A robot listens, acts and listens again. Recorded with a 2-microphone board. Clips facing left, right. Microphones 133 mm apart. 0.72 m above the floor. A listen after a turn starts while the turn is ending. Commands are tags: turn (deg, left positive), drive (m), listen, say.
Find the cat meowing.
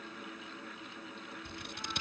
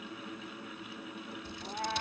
<turn deg="-60"/>
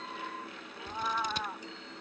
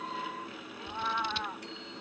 <say>Found it: a cat meowing, straight ahead.</say>